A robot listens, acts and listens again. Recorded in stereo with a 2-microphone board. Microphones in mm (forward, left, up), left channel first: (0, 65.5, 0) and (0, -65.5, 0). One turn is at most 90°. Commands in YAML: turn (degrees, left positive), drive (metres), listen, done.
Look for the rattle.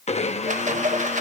turn: -70
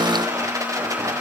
turn: -25
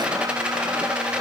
turn: -10
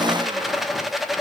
done: "Facing the rattle, 1 to 2 m away."